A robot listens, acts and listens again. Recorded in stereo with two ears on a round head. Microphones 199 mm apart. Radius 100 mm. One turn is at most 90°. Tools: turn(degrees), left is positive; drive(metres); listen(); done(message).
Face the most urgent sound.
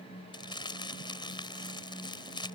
listen()
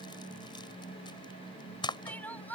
turn(degrees=30)
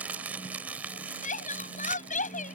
turn(degrees=90)
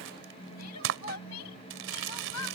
turn(degrees=90)
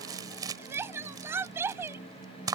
turn(degrees=-10)
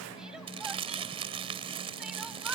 listen()
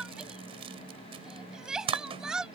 done("Facing the crying.")